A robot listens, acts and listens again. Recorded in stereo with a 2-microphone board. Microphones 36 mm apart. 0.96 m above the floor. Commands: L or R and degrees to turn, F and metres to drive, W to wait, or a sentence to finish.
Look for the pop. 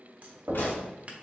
L75
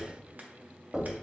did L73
W
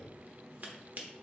I heard a pop, but can't make it out now. It was about straight ahead or 35° left.